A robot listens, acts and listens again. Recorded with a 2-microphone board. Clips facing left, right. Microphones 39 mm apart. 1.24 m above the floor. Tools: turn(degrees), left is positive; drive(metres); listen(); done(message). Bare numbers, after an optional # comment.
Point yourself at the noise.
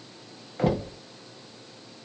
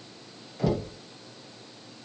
# The knocking: about 45° left or 135° left.
turn(45)
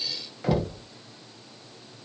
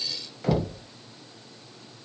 done("Facing the knocking, under 1 m away.")